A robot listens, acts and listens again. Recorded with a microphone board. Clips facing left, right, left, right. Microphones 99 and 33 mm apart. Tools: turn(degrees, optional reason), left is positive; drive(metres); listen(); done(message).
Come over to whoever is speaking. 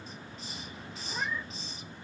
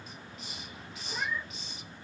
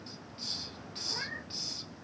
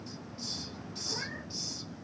listen()
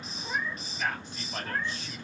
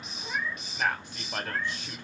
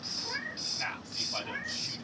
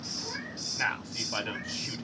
turn(degrees=-65, reason="The man speaking: about 65° right or 115° right.")
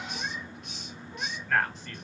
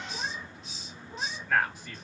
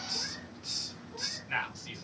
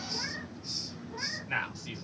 turn(degrees=-10, reason="So it is at 10° right.")
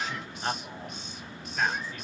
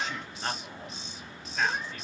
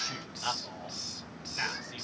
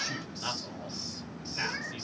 drive(metres=1.0)
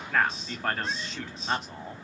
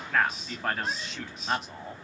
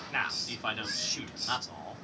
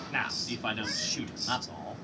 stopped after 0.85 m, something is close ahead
done("Arrived at the man speaking, straight ahead.")